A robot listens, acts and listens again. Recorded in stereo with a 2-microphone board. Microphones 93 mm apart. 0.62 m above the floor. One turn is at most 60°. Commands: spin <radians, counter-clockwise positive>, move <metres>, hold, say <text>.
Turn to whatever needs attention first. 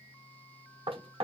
hold
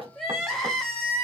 spin 0.52
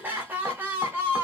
spin -0.44
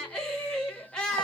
spin 0.17
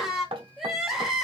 say Facing the crying.